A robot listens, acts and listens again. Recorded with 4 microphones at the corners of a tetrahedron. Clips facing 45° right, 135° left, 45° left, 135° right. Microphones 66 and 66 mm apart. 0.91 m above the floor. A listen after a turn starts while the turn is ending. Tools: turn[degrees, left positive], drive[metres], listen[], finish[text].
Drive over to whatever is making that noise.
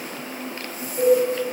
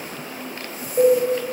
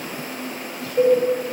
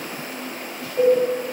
Thought: The cowbell: 125° left.
Action: turn[125]
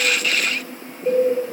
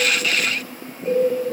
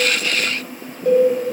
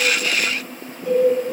Thought: The cowbell is now 40° left.
Action: turn[40]
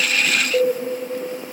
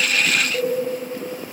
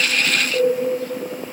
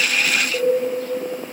Thought: The cowbell is now 15° right.
Action: turn[-15]
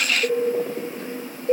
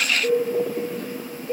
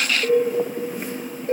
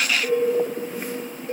Action: drive[1.0]
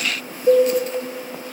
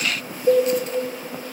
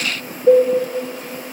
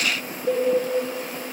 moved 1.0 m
Action: drive[1.0]
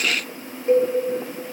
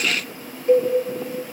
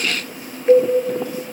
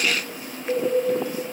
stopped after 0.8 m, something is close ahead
Thought: The cowbell is now 10° left.
Action: turn[10]
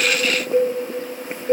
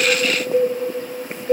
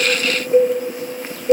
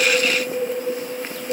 Action: finish[I am next to the cowbell.]